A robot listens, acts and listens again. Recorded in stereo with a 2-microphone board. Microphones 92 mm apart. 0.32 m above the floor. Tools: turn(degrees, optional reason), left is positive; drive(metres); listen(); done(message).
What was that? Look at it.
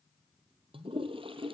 turn(degrees=-90)
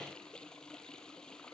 turn(degrees=10, reason="So it is at 10° left.")
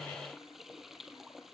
done("Found it: a toilet flushing, straight ahead.")